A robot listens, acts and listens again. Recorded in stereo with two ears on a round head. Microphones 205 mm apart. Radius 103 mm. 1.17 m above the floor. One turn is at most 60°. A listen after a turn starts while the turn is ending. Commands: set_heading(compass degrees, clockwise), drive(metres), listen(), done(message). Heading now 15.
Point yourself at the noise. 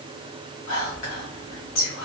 set_heading(320)
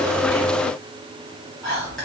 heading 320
done("Found it: whispering, straight ahead.")